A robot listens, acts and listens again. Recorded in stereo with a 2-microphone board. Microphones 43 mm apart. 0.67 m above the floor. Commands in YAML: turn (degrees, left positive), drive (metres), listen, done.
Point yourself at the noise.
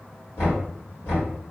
turn: 70
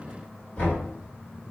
turn: 35
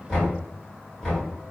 turn: 15
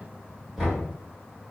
done: "Found it: knocking, straight ahead."